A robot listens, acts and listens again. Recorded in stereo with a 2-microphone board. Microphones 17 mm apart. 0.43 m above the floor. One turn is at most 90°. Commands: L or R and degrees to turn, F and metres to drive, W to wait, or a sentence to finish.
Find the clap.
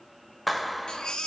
L30
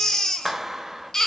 R30
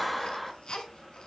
Found it: a clap, straight ahead.